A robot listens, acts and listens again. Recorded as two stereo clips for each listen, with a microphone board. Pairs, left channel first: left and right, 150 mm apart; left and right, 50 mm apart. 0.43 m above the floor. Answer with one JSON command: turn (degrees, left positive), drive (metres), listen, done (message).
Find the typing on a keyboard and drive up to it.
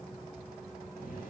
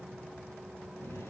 {"listen": true}
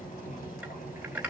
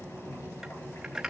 {"turn": -30}
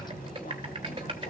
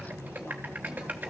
{"turn": -140}
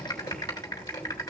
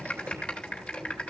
{"turn": 25}
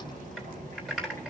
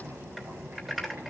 {"drive": 1.0}
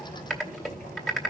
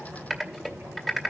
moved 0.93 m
{"drive": 1.0}
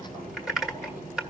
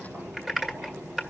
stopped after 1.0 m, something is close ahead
{"done": "Arrived at the typing on a keyboard, straight ahead."}